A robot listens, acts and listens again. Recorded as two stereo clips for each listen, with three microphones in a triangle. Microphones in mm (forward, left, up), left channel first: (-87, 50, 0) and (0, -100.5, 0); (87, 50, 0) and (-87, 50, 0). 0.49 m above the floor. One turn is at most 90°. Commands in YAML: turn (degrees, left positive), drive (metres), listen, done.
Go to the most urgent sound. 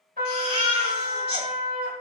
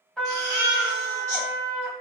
turn: 90
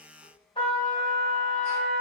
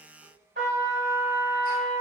turn: 20
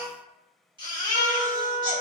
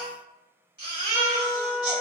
drive: 1.0
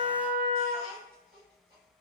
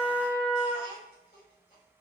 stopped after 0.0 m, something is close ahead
listen: true
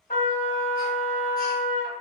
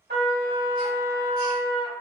listen: true
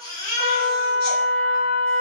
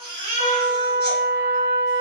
done: "Something is in my way. I am facing the baby crying but have not reached it."